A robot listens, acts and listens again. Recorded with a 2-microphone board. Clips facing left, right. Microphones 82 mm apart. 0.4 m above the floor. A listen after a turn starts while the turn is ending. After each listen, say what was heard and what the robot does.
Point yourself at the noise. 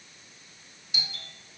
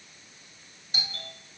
The doorbell: about 40° right or 140° right. Turn 40° right.
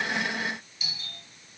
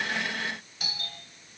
So it is at 90° right. Turn 90° right.
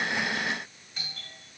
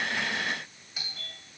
The doorbell is now 10° right. Turn 10° right.
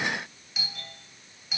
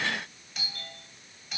Found it: a doorbell, straight ahead.